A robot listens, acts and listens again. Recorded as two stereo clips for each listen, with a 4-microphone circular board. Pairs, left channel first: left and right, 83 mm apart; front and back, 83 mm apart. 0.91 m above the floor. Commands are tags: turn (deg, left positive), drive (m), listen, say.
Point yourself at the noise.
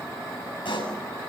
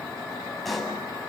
<turn deg="90"/>
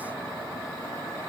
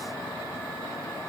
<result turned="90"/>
<say>Facing where the pop came from. I can't hear it now.</say>